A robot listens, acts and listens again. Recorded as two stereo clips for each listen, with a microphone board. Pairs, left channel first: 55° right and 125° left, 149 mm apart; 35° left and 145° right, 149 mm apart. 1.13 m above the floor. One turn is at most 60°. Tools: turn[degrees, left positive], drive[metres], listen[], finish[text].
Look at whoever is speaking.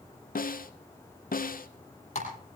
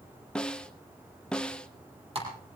Action: listen[]
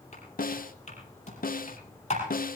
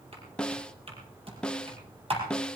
Action: listen[]
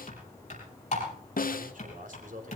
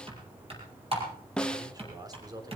Thought: The man speaking: 150° left.
Action: turn[60]
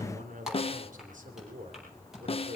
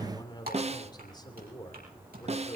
Thought: The man speaking is now 95° left.
Action: turn[60]
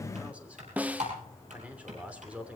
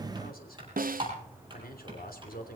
Thought: The man speaking is now 45° left.
Action: turn[45]
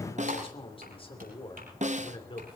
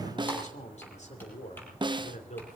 Action: finish[Facing the man speaking.]